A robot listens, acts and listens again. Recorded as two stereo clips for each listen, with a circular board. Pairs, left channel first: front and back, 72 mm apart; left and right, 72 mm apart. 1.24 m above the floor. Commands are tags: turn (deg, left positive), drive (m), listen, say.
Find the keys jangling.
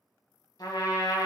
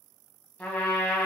<listen/>
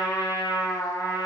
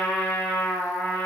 <listen/>
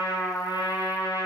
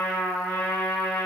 <say>I can't make out keys jangling, only a trumpet.</say>